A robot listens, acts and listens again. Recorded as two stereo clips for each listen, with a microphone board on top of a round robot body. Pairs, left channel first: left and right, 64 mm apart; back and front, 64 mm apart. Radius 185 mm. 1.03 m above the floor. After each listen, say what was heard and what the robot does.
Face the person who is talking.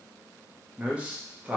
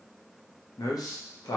The man speaking: 160° right. Turn 160° right.
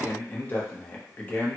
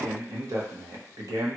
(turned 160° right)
The man speaking is now 25° left. Turn 25° left.
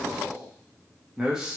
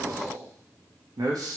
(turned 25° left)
The man speaking is now 10° right. Turn 10° right.
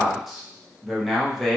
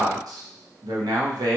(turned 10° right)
Found it: a man speaking, straight ahead, under 1 m away.